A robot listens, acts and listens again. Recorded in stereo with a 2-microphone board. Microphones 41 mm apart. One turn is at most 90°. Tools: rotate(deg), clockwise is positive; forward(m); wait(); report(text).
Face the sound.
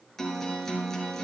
rotate(-30)
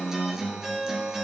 rotate(20)
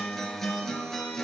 rotate(-10)
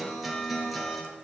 report("Facing the guitar.")